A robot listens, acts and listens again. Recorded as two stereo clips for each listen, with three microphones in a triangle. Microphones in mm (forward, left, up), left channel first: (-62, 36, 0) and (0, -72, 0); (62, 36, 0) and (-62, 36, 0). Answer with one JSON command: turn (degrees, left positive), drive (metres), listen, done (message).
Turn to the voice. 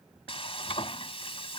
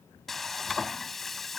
{"listen": true}
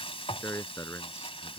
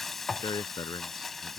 {"turn": 55}
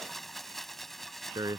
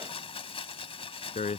{"done": "Facing the man speaking."}